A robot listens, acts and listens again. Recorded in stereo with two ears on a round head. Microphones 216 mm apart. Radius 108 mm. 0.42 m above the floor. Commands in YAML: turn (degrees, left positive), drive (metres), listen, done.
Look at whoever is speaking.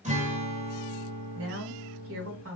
turn: -60
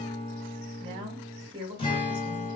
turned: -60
turn: -25
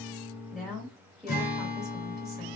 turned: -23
done: "Facing the woman speaking."